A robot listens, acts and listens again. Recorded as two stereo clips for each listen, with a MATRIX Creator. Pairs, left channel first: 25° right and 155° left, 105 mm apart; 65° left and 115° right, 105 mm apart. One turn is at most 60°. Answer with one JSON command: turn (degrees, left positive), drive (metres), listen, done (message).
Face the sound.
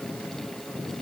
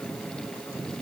{"listen": true}
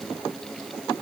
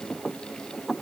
{"listen": true}
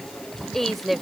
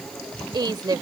{"turn": -60}
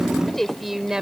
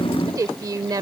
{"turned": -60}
{"turn": -60}
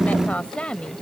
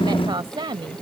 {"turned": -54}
{"turn": -60}
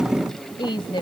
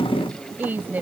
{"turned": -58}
{"turn": -45}
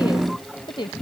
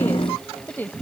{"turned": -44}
{"done": "Found it: a woman speaking, straight ahead."}